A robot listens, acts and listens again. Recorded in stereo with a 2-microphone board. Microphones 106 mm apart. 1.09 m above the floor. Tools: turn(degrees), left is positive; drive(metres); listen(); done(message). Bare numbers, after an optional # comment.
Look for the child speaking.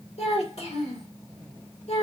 turn(90)
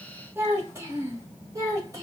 # So it is at 30° right.
turn(-30)
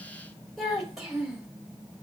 done("Facing the child speaking, 2 to 4 m away.")